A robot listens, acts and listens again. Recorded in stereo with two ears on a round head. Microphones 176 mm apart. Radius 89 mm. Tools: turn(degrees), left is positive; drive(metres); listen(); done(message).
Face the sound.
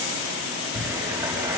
turn(degrees=-30)
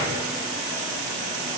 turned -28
listen()
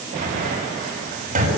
turn(degrees=-135)
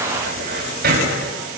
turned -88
turn(degrees=-45)
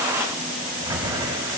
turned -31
turn(degrees=-15)
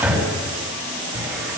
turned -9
done("Found it: a cupboard door, straight ahead.")